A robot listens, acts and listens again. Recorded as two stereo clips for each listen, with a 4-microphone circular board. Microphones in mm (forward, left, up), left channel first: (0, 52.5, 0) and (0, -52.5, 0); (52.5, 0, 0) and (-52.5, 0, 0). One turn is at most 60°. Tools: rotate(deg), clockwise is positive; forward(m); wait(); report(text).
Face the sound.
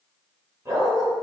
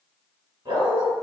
rotate(60)
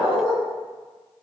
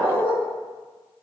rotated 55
rotate(60)
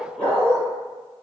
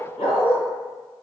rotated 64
rotate(-15)
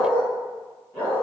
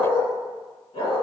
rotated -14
rotate(-15)
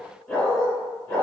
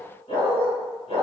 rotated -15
rotate(-10)
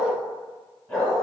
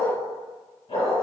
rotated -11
report("Facing the dog barking.")